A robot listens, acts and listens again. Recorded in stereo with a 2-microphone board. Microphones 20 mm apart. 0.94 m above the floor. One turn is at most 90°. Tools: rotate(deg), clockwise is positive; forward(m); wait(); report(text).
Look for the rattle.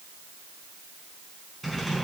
rotate(-30)
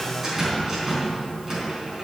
rotate(20)
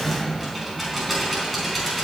report("Found it: a rattle, straight ahead, over 4 m away.")